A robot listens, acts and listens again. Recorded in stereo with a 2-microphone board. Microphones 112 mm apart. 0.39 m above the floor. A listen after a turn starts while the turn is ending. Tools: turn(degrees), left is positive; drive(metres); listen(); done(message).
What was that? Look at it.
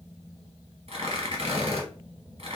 turn(degrees=-65)
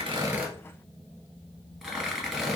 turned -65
done("Facing the tearing paper.")